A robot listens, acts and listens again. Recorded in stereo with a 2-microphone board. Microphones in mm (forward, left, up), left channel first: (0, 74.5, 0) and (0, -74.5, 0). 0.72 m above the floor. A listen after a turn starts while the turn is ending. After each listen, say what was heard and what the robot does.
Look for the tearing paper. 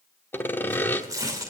The tearing paper: about 25° right or 155° right. Turn 25° right.
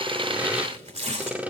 So it is at 130° right. Turn 130° right.
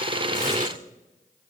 Keep listening.
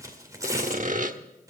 The tearing paper is now 25° right. Turn 25° right.
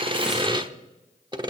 Keep listening.
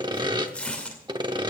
The tearing paper is now 10° left. Turn 10° left.
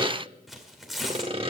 Facing the tearing paper, 2 to 4 m away.